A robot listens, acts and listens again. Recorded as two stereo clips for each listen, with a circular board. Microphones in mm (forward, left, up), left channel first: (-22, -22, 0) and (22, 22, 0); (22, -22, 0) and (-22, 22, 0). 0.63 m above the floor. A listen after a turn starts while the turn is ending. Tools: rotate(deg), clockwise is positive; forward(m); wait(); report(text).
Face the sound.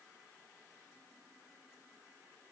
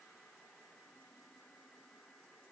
wait()
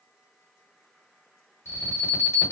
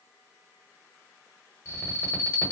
rotate(90)
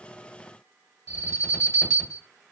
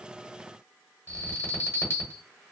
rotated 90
rotate(-10)
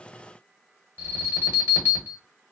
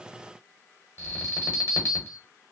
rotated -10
report("Facing the alarm, 1 to 2 m away.")